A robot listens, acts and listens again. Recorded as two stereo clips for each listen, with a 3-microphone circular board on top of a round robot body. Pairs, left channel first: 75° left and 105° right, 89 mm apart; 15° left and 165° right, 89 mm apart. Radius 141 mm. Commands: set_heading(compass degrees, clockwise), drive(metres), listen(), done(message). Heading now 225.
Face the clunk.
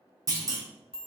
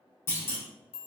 set_heading(275)
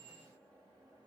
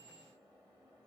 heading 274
done("I heard a clunk from this way, but can't make it out now.")